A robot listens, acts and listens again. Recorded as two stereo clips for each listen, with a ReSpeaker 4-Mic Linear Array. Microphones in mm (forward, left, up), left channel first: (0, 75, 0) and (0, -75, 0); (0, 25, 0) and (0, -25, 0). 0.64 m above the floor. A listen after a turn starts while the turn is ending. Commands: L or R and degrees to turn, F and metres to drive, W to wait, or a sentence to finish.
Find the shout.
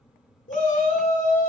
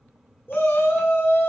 L55
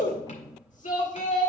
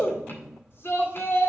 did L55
L65
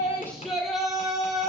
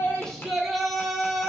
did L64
Facing the shout, 1 to 2 m away.